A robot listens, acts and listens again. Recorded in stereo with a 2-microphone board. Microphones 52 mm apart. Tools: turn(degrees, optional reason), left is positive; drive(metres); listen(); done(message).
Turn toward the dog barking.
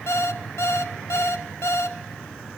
listen()
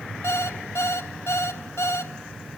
listen()
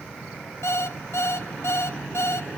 done("I can't make out a dog barking, only an alarm clock.")